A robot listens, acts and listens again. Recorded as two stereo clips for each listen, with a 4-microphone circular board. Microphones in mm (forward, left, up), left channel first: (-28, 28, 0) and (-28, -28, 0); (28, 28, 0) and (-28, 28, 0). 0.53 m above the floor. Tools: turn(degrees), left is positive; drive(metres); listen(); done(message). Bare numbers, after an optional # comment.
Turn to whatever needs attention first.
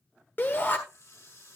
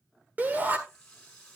# The shout: 130° left.
turn(130)
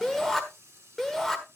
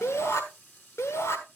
done("Found it: a shout, straight ahead.")